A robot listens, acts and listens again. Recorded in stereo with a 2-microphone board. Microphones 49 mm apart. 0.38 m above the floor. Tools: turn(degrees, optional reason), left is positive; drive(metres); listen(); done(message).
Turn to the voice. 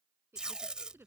turn(degrees=-60, reason="The woman speaking: about 60° right or 120° right.")
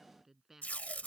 done("Facing the woman speaking.")